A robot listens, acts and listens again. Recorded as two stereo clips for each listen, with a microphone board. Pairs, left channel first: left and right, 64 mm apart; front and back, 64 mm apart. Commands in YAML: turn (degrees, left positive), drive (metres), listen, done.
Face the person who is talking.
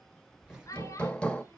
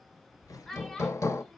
turn: 80
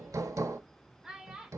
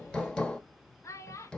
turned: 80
turn: -10
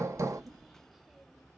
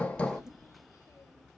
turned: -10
listen: true
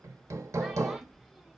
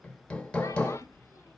listen: true
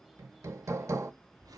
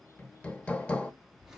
done: "I heard a child speaking from this way, but can't make it out now."